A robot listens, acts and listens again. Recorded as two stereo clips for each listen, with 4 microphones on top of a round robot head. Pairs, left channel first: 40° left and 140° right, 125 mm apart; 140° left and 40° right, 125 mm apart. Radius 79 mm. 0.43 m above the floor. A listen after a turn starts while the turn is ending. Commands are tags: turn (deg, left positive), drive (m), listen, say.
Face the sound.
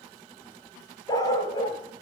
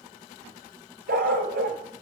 <turn deg="-20"/>
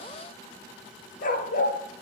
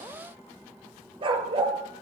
<turn deg="15"/>
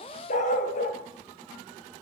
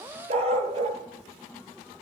<turn deg="10"/>
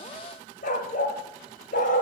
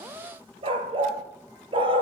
<turn deg="15"/>
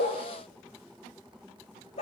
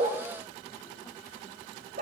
<say>Found it: a dog barking, straight ahead, 2 to 4 m away.</say>